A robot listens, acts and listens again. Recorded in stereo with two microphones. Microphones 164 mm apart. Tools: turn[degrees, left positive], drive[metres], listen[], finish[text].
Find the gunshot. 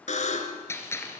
Thought: The gunshot: about 15° left or 165° left.
Action: turn[15]
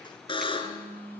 Action: listen[]
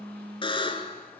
Action: finish[I heard a gunshot, but can't make it out now. It was about straight ahead or 150° left.]